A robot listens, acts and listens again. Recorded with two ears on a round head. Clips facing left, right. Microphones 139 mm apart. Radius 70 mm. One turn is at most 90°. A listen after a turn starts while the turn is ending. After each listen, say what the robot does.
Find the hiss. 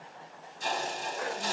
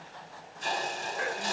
Turn 90° left.
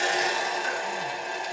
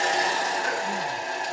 Found it: a hiss, straight ahead, 1 to 2 m away.